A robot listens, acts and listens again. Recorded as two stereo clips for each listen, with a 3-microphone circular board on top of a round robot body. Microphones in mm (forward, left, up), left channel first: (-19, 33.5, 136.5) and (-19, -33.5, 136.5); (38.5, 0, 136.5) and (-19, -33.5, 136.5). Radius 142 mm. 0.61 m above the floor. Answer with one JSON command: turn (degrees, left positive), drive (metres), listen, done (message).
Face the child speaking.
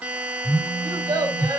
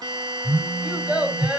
{"turn": -70}
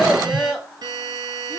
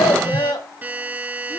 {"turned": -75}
{"turn": 10}
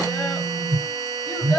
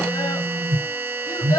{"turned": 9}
{"turn": 15}
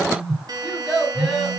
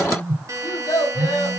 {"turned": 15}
{"done": "Found it: a child speaking, straight ahead, over 4 m away."}